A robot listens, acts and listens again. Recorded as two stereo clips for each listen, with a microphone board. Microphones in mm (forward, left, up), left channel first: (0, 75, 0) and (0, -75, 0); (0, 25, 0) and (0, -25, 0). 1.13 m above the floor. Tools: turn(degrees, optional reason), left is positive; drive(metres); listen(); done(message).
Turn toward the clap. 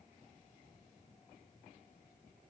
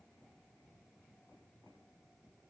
listen()
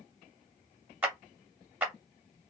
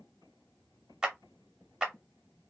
turn(degrees=-30)
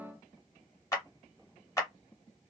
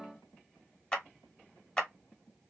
turn(degrees=20, reason="So it is at 20° left.")
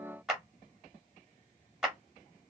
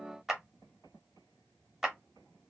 done("Facing the clap, 1 to 2 m away.")